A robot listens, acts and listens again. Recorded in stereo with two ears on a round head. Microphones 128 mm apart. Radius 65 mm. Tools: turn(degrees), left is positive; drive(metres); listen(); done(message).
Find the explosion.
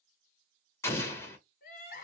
turn(degrees=20)
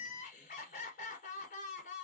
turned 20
listen()
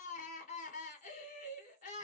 done("I heard an explosion, but can't make it out now. It was about straight ahead or 140° left.")